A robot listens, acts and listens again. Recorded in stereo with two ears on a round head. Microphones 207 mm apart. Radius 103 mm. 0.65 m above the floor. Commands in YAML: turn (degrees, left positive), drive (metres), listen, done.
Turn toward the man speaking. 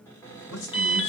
turn: 50
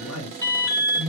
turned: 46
turn: 70
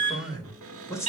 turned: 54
turn: 15
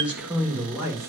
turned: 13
turn: -10
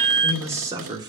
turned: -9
turn: -15
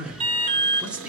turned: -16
done: "Facing the man speaking."